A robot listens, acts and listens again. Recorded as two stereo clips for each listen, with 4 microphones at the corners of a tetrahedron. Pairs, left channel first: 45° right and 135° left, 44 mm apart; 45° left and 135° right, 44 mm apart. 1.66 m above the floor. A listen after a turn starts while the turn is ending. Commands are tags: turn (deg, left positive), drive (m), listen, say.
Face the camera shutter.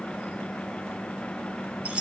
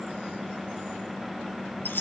<listen/>
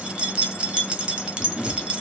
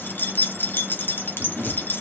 <turn deg="-95"/>
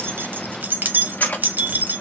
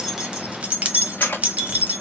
<say>Facing the camera shutter.</say>